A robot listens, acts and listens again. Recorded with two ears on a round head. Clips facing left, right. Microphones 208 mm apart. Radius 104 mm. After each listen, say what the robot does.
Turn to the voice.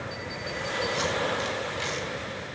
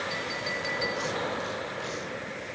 Keep listening.
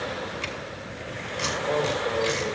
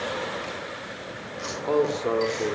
Turn 60° right.
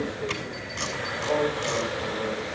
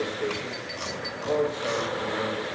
Turn 35° right.
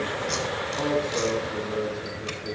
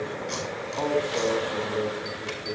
Found it: a man speaking, straight ahead, 2 to 4 m away.